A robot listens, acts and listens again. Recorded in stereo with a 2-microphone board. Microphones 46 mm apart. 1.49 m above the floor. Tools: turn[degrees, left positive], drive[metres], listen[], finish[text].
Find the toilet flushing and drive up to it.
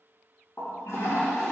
Thought: The toilet flushing: about 75° left or 105° left.
Action: turn[75]
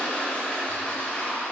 Thought: So it is at 30° left.
Action: turn[30]
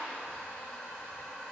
Thought: The toilet flushing is now 10° left.
Action: turn[10]
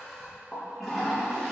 Action: drive[1.0]
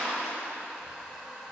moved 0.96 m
Action: drive[1.0]
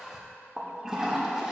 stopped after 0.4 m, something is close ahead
Thought: The toilet flushing is now 10° right.
Action: turn[-10]
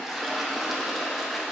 Action: finish[I am next to the toilet flushing.]